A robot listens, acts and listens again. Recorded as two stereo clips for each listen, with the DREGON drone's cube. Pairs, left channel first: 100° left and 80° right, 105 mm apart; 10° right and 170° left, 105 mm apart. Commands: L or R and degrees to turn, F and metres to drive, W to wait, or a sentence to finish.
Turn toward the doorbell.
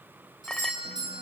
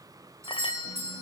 R125
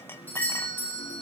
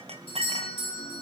L25
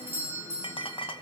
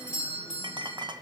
R10
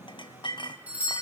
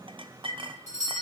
Found it: a doorbell, straight ahead.